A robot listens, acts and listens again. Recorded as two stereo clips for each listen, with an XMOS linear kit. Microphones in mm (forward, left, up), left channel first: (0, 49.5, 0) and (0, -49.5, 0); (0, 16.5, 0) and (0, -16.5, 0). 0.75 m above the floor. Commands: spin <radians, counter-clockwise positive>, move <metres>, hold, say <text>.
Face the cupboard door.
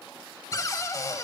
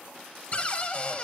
spin 0.61
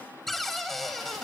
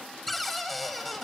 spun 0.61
say Found it: a cupboard door, straight ahead, 1 to 2 m away.